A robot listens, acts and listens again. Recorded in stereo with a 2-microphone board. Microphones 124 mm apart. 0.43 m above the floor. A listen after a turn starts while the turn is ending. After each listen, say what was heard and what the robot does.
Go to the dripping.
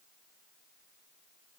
Keep listening.
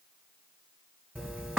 Turn 30° right.
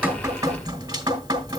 So it is at 140° right. Turn 140° right.
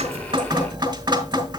The dripping is now 35° right. Turn 35° right.
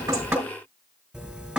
Drive 1.0 m forward.
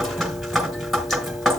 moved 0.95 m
Drive 1.0 m forward.
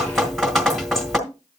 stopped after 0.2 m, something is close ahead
I am next to the dripping.